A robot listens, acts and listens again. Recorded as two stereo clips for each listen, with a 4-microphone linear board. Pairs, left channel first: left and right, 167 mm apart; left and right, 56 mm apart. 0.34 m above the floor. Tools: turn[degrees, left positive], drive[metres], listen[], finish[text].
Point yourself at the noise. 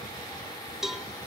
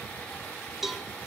Action: turn[30]
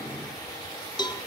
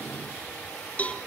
Thought: So it is at 155° left.
Action: turn[155]
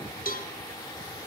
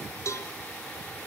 Thought: The cowbell is now 65° left.
Action: turn[65]
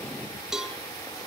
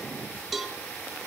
Action: finish[Found it: a cowbell, straight ahead.]